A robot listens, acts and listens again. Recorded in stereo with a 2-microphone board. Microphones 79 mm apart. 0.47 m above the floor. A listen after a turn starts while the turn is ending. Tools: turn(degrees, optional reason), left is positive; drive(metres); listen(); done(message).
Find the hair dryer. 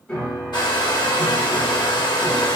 turn(degrees=70, reason="The hair dryer: about 70° left or 110° left.")
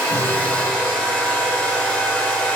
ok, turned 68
turn(degrees=15, reason="So it is at 15° left.")
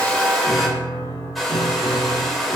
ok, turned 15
done("Facing the hair dryer.")